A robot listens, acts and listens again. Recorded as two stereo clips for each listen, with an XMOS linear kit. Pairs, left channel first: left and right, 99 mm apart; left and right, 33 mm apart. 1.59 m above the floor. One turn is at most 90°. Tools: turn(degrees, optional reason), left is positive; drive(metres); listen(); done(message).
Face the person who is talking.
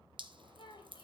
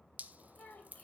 turn(degrees=55, reason="The child speaking: about 55° left or 125° left.")
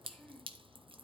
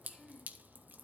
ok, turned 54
done("Facing the child speaking, 2 to 4 m away.")